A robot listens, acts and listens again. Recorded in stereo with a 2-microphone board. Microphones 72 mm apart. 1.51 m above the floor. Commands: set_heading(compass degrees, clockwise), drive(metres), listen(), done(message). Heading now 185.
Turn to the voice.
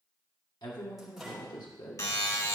set_heading(115)
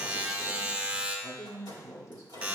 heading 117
set_heading(77)
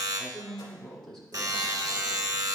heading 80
done("Found it: a woman speaking, straight ahead, 1 to 2 m away.")